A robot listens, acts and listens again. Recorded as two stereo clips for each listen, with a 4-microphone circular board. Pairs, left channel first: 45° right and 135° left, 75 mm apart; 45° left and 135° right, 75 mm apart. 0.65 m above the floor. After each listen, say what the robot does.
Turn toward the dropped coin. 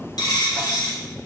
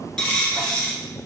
Turn 35° right.
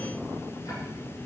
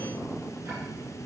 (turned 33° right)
Facing where the dropped coin came from. I can't hear it now.